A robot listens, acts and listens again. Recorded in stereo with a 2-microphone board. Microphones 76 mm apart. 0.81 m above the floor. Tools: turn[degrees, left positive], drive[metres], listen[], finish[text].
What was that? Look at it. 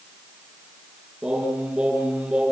Action: turn[-30]
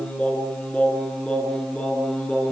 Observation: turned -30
Thought: So it is at 15° left.
Action: turn[15]
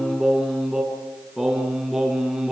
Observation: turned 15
Action: finish[Facing the singing.]